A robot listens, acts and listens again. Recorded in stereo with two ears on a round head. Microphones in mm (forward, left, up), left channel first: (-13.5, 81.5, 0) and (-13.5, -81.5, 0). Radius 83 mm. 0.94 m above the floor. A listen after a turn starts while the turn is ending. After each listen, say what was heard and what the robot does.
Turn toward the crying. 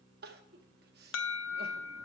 The crying: about 55° right or 125° right. Turn 55° right.
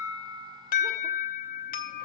Keep listening.
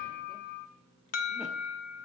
Keep listening.
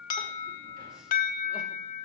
I heard crying, but can't make it out now. It was about straight ahead or 70° right.